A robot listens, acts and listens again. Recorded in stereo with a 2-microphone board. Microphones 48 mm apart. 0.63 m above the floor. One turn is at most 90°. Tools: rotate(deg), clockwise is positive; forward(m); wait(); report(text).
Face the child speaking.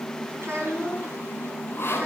rotate(55)
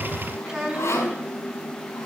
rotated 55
report("Found it: a child speaking, straight ahead, over 4 m away.")